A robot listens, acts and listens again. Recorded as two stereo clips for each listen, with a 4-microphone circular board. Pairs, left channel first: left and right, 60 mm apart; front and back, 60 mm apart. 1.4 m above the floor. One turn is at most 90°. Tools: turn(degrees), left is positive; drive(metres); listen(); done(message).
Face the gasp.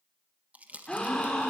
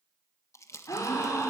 turn(degrees=15)
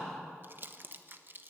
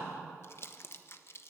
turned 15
done("Found it: a gasp, straight ahead.")